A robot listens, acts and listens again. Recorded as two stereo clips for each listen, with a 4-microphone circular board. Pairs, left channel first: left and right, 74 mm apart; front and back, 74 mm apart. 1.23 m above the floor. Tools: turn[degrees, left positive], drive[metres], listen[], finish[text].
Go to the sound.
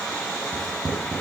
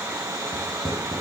Action: drive[1.0]
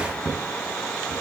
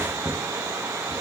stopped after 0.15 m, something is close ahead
Action: finish[Something is in my way. I am facing the writing but have not reached it.]